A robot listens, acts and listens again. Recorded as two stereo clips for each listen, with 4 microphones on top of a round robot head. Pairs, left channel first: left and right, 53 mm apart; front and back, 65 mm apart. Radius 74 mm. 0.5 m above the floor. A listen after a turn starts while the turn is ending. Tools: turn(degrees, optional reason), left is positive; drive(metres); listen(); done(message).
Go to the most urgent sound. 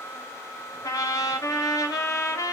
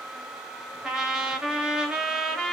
listen()
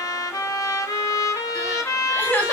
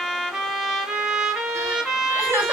turn(degrees=145, reason="The crying: 145° left.")
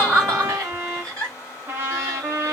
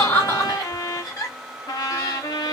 turn(degrees=10, reason="The crying is now 10° left.")
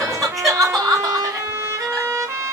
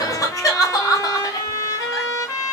drive(metres=1.0)
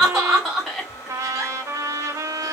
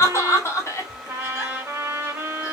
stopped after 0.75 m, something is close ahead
turn(degrees=-10, reason="The crying is now 10° right.")
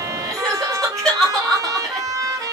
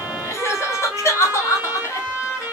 done("I am next to the crying.")